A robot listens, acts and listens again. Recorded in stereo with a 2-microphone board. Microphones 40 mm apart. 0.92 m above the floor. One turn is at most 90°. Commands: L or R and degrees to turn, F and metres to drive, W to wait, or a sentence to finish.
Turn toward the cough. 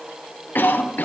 L55
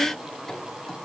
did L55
W
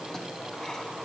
W
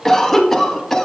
L10
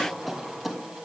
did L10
Found it: a cough, straight ahead.